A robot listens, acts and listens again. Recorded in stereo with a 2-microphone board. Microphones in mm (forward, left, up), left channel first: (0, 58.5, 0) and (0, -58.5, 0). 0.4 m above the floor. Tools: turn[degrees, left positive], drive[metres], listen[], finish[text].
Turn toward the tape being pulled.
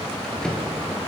Action: listen[]
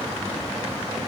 Action: listen[]
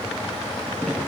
Action: finish[I can't make out tape being pulled to turn to.]